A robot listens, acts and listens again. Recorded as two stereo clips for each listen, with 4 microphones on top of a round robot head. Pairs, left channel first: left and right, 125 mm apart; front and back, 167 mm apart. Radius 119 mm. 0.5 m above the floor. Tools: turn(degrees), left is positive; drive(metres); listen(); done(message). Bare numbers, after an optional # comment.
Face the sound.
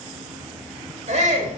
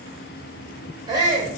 # The shout: 110° right.
turn(-110)
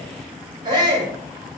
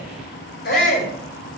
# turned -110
# The shout is now 30° right.
turn(-30)
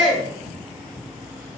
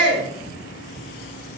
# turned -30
done("Facing the shout.")